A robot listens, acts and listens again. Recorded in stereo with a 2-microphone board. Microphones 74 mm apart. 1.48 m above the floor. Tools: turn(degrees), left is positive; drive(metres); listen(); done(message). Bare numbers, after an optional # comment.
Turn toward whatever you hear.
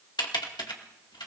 turn(90)
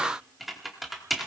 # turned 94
done("Found it: typing on a keyboard, straight ahead.")